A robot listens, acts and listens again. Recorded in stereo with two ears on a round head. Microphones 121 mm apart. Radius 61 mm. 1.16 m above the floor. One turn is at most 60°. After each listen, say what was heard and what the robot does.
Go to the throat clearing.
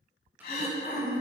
The throat clearing: about 60° left or 120° left. Turn 60° left.
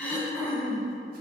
So it is at 10° left. Turn 10° left.
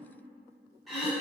Drive 1.0 m forward.
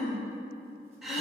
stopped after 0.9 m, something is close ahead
I am next to the throat clearing.